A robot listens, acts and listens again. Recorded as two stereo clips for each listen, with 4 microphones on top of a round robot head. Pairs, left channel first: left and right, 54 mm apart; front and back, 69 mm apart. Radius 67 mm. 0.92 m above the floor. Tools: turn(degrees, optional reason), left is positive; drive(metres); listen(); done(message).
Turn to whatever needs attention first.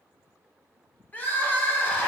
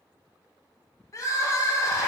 turn(degrees=35, reason="The crying: 35° left.")
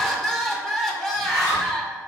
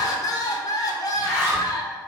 done("Found it: crying, straight ahead.")